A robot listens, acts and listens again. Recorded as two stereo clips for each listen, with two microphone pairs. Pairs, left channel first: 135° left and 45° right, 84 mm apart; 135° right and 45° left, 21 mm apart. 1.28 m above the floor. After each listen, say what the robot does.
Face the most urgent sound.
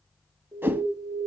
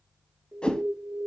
Found it: an alarm, straight ahead.